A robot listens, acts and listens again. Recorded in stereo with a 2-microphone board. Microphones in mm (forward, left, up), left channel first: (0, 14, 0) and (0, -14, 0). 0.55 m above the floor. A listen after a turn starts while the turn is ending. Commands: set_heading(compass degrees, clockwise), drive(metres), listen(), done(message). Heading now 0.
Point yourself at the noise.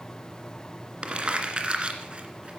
set_heading(40)
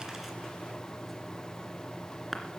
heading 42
done("Facing the crumpling.")